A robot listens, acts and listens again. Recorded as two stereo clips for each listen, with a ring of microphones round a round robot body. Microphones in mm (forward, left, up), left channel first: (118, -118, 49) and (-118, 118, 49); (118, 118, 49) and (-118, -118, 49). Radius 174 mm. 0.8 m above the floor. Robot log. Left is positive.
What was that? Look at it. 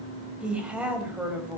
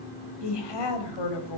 note: The woman speaking: 50° left.
cmd yaw +50
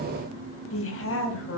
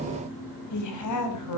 end: Facing the woman speaking, over 4 m away.